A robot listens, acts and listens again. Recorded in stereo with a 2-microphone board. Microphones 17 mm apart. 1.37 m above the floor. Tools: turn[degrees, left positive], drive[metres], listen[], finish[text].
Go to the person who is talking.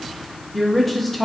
Thought: The woman speaking: about 20° left or 160° left.
Action: turn[20]
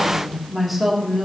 Action: drive[1.0]
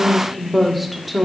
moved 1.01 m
Action: drive[1.0]
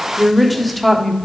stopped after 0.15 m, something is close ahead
Thought: The woman speaking is now 10° left.
Action: turn[10]
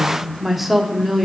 Action: finish[I am next to the woman speaking.]